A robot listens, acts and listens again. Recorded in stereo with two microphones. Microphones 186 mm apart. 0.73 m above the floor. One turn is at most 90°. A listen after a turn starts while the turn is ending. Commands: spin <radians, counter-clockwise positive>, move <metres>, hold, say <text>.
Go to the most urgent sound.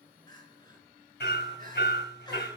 spin 0.35
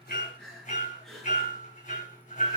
move 1.0
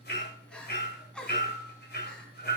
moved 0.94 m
move 1.0
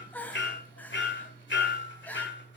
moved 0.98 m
spin 0.17
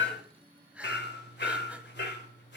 move 1.0
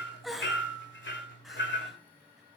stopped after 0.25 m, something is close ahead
say Arrived at the crying, straight ahead.